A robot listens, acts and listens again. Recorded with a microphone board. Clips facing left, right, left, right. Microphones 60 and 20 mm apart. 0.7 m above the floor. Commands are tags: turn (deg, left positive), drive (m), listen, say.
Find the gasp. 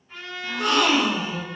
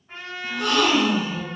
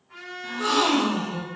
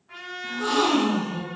<turn deg="35"/>
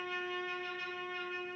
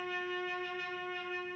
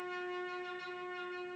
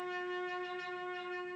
<listen/>
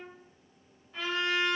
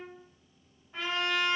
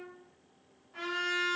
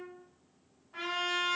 <say>I heard a gasp, but can't make it out now. It was about straight ahead or 110° left.</say>